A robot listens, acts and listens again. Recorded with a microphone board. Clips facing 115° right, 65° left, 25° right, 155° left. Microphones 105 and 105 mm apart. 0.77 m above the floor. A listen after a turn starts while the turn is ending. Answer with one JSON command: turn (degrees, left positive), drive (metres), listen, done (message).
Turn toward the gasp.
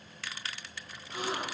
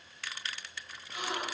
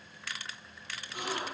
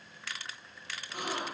{"turn": -165}
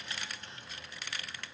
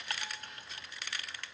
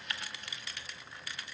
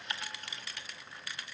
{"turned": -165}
{"done": "Facing where the gasp came from. I can't hear it now."}